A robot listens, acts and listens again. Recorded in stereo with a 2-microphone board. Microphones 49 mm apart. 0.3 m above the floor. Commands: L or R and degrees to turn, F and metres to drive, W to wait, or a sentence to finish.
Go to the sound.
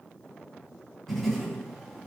L30
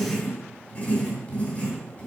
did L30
L140
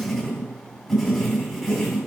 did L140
F1.0
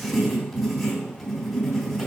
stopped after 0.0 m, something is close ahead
Something is in my way. I am facing the writing but have not reached it.